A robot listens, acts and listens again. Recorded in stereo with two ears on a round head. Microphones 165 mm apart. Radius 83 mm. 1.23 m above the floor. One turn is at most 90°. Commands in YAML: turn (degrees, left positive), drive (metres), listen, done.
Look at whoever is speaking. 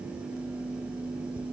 listen: true
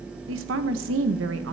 turn: -75
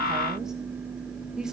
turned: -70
done: "Found it: a woman speaking, straight ahead, 1 to 2 m away."